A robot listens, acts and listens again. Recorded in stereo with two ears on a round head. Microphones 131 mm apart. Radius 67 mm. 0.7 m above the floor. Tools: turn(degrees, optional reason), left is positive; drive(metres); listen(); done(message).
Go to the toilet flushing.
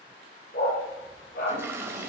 turn(degrees=-15, reason="The toilet flushing: about 15° right or 165° right.")
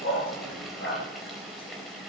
drive(metres=1.0)
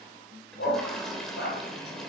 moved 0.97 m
drive(metres=1.0)
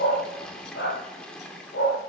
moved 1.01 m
drive(metres=1.0)
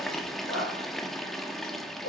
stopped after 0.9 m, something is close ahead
done("Arrived at the toilet flushing, straight ahead.")